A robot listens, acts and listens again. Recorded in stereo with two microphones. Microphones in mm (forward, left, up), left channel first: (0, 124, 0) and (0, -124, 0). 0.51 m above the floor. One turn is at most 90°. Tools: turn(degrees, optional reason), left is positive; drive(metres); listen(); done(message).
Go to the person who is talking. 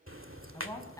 turn(degrees=30)
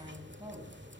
turn(degrees=-20, reason="So it is at 20° right.")
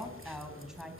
drive(metres=1.0)
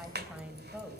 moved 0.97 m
drive(metres=1.0)
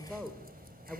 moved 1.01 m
drive(metres=1.0)
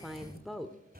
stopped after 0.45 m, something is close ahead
done("Arrived at the woman speaking, straight ahead.")